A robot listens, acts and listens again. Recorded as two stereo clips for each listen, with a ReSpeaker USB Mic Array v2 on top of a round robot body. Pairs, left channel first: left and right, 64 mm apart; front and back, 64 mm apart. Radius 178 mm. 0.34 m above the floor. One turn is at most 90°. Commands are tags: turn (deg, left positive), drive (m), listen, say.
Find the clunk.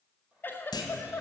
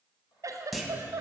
<turn deg="90"/>
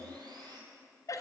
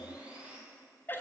<say>I heard a clunk from this way, but can't make it out now.</say>